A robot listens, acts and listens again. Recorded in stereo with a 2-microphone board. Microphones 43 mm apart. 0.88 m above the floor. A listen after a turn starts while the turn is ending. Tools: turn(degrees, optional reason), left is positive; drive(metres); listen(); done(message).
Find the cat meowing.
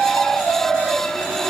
listen()
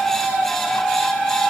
listen()
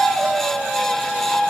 done("I can't make out a cat meowing.")